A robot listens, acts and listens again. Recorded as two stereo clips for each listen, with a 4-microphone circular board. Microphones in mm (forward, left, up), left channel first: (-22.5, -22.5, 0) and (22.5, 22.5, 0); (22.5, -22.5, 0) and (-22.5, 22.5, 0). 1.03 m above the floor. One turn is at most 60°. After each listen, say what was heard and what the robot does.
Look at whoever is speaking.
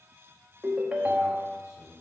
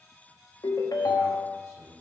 The man speaking: straight behind. Turn 60° left.
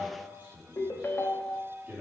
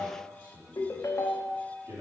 The man speaking is now 110° left. Turn 60° left.
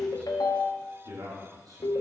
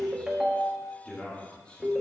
The man speaking is now 25° left. Turn 25° left.
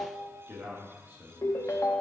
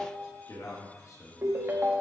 Facing the man speaking, 1 to 2 m away.